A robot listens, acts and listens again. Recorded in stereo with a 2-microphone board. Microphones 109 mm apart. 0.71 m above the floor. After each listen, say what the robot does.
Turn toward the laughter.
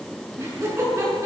Turn 25° right.
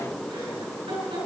Turn 125° right.
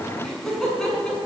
Found it: laughter, straight ahead, over 4 m away.